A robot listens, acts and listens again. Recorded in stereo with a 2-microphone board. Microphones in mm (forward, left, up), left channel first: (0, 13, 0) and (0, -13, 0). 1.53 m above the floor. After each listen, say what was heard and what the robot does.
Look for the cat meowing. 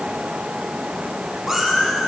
Turn 30° right.
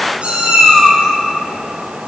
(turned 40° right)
So it is at 125° right. Turn 125° right.
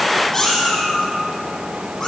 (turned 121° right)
The cat meowing is now 15° left. Turn 15° left.
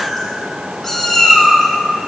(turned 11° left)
Found it: a cat meowing, straight ahead.